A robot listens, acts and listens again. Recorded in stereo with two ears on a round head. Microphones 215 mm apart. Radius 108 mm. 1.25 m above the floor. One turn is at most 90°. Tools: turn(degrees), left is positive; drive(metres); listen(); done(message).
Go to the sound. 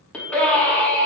turn(degrees=30)
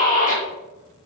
turn(degrees=90)
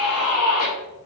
turn(degrees=70)
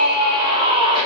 turn(degrees=-20)
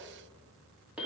drive(metres=1.0)
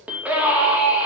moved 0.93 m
drive(metres=1.0)
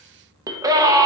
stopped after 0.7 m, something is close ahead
turn(degrees=-15)
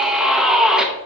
done("Arrived at the scream, straight ahead.")